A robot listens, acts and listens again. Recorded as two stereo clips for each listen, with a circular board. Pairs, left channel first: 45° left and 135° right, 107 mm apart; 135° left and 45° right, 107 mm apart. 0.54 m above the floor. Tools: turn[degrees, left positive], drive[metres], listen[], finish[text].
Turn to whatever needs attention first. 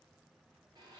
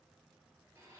Action: listen[]
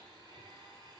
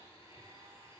Action: listen[]
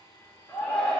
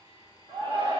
Thought: The shout: 30° right.
Action: turn[-30]
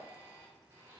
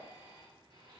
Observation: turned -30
Action: listen[]
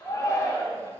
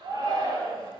Action: finish[Found it: a shout, straight ahead, 1 to 2 m away.]